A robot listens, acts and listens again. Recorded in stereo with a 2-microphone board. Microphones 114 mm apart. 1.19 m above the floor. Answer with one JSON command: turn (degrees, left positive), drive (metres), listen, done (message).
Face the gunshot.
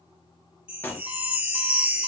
{"turn": 20}
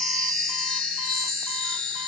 {"listen": true}
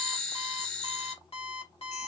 {"done": "I heard a gunshot, but can't make it out now. It was about straight ahead or 140° left."}